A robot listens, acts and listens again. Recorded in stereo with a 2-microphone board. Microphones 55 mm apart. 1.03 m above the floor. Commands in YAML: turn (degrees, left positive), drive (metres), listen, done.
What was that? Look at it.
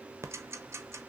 turn: -55
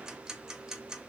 turn: -15
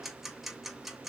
done: "Facing the ticking."